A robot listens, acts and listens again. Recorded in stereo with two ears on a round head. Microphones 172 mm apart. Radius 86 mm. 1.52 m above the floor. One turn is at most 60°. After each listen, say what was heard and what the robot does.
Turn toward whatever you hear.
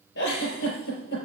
The giggle: about 70° left or 110° left. Turn 60° left.
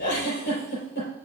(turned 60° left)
So it is at 50° left. Turn 50° left.
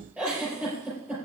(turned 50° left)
The giggle is now 10° right. Turn 10° right.
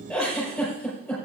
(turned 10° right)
Found it: a giggle, straight ahead, over 4 m away.